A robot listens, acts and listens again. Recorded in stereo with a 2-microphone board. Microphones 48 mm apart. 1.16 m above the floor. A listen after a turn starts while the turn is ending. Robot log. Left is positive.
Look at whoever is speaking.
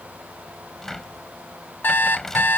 cmd idle
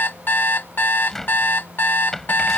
cmd idle
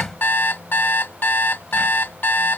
end: I can't make out anyone speaking to turn to.